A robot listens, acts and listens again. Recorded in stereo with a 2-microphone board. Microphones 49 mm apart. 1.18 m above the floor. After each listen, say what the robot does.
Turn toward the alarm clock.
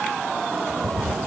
Keep listening.
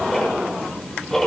Keep listening.
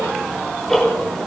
I can't make out an alarm clock to turn to.